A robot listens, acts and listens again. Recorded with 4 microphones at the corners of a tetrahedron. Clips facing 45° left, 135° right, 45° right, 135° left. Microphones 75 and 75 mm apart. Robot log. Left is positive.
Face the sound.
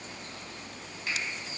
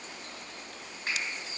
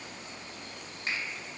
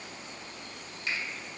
note: The finger snap: 90° right.
cmd yaw -90
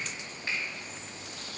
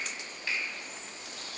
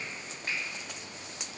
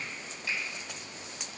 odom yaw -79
note: Nothing new. It was at 10° right.
cmd yaw -10
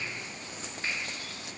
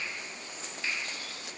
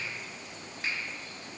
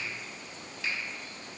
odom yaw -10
end: Found it: a finger snap, straight ahead.